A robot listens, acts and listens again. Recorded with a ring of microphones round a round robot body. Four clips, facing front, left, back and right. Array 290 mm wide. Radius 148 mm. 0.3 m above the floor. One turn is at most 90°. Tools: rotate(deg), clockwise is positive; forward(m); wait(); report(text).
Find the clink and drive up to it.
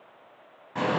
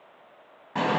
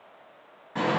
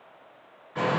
wait()
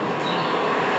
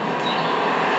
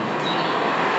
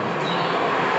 wait()
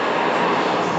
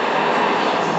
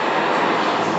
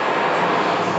report("I can't make out a clink, only a bird.")